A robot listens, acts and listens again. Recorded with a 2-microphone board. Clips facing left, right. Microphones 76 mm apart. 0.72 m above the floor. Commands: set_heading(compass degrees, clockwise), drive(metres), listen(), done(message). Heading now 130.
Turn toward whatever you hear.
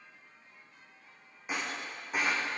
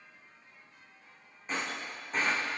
set_heading(100)
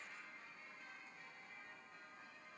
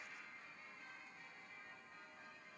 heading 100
listen()
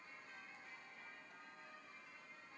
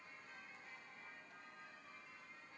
done("I heard breaking glass, but can't make it out now. It was about 20° right or 140° left.")